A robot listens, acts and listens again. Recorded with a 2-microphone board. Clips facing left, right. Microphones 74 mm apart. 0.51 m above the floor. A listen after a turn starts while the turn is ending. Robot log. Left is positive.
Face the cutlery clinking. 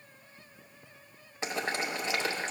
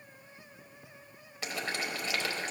cmd idle
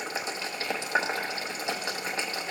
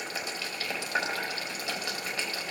cmd idle
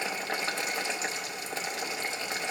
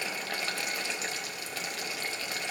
end: I can't make out cutlery clinking, only boiling.